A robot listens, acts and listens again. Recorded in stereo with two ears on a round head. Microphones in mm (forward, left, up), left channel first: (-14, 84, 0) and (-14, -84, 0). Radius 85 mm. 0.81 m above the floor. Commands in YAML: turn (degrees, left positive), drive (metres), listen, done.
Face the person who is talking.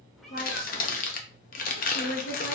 turn: 60
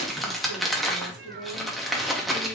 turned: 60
turn: 45
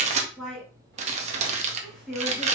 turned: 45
done: "Facing the woman speaking."